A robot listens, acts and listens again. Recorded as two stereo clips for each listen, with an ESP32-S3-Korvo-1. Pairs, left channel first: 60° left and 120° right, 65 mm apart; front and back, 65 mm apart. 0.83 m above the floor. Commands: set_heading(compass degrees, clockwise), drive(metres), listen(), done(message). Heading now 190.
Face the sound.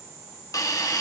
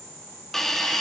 set_heading(105)
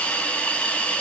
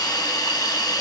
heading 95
set_heading(105)
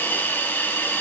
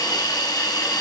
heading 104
done("Found it: a hiss, straight ahead.")